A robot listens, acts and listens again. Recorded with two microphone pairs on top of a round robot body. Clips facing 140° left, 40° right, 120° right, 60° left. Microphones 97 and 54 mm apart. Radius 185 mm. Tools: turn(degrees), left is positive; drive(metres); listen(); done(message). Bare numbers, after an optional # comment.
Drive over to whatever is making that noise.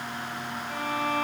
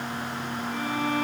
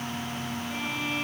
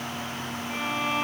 # The violin: 110° left.
turn(110)
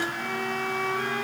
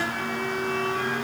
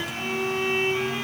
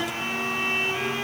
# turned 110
# The violin is now 20° right.
turn(-20)
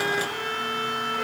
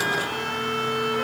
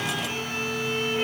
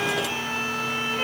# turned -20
drive(1.0)
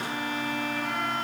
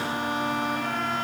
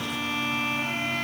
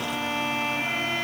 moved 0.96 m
drive(1.0)
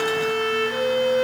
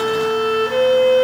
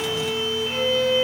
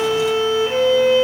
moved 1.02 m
# The violin is now 10° left.
turn(10)
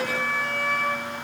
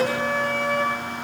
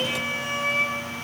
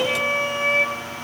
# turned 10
drive(1.0)
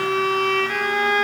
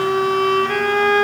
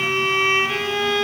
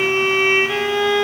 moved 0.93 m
drive(1.0)
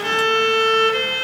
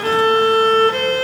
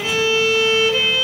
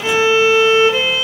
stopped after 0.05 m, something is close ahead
done("I am next to the violin.")